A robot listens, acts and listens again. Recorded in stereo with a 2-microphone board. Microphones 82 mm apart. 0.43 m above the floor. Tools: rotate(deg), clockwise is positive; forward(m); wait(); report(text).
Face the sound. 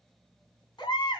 rotate(-65)
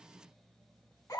rotate(-50)
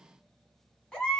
rotate(-15)
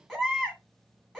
report("Found it: a baby crying, straight ahead, 2 to 4 m away.")